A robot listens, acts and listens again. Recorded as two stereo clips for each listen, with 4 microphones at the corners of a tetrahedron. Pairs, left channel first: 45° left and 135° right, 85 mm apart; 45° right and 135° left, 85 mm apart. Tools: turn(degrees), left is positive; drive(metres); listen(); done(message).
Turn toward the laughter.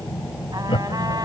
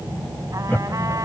turn(degrees=25)
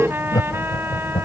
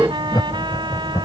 done("Facing the laughter.")